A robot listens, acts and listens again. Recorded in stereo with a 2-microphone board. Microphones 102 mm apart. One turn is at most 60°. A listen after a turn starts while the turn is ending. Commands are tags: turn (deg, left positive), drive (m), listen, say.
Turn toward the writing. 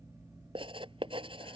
<turn deg="-60"/>
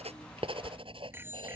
<turn deg="-60"/>
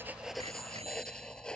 <say>Found it: writing, straight ahead.</say>